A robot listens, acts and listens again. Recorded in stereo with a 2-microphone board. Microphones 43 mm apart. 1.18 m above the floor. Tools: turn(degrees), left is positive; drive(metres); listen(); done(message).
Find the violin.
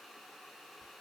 listen()
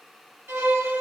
turn(degrees=-65)
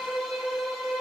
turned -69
turn(degrees=-10)
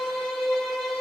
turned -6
done("Facing the violin.")